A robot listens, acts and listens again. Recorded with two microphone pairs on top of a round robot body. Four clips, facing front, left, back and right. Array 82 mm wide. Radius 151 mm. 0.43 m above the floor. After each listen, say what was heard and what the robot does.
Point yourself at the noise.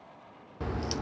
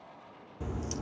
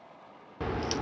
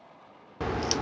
The crack: 105° right. Turn 105° right.
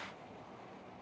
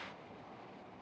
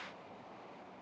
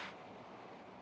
I heard a crack from this way, but can't make it out now.